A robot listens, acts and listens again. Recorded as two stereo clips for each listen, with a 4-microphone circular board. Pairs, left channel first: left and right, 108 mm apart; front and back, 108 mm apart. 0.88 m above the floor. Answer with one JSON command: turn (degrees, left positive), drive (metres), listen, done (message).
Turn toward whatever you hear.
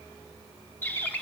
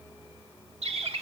{"turn": 160}
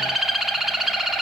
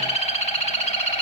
{"done": "Found it: a bird, straight ahead."}